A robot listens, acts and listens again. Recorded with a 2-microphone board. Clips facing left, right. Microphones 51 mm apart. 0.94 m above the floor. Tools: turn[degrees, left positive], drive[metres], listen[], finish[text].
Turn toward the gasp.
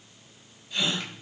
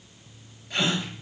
Action: turn[-90]
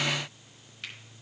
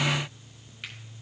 Action: finish[I heard a gasp from this way, but can't make it out now.]